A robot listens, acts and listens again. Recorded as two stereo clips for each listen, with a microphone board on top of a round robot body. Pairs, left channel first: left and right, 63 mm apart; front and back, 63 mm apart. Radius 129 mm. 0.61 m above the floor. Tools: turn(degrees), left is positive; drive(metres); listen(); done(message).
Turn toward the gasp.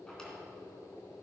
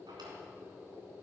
listen()
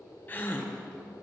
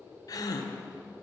turn(degrees=25)
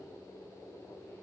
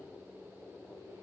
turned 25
done("Facing where the gasp came from. I can't hear it now.")